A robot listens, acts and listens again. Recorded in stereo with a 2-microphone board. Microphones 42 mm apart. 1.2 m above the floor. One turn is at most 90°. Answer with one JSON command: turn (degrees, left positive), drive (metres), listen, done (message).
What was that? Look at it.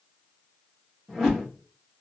{"turn": 30}
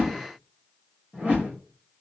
{"turn": -30}
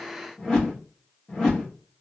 {"turn": 15}
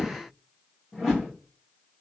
{"done": "Facing the whoosh, 1 to 2 m away."}